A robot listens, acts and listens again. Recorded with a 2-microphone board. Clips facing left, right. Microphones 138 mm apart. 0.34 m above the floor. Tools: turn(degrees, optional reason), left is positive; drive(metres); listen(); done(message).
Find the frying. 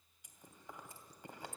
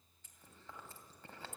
listen()
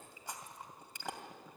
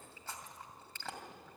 listen()
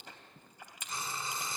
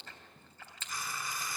turn(degrees=25, reason="The frying: about 25° left or 155° left.")
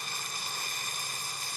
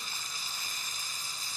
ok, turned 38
turn(degrees=115, reason="So it is at 115° left.")
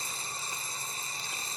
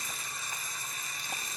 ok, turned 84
turn(degrees=35, reason="The frying is now 35° left.")
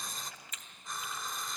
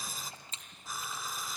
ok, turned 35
done("Found it: frying, straight ahead.")